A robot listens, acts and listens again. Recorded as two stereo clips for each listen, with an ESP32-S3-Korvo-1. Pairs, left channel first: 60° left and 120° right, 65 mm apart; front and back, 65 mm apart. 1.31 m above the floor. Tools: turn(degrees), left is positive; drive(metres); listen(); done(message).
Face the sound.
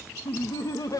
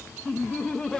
turn(degrees=75)
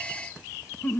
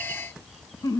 done("Found it: laughter, straight ahead, 1 to 2 m away.")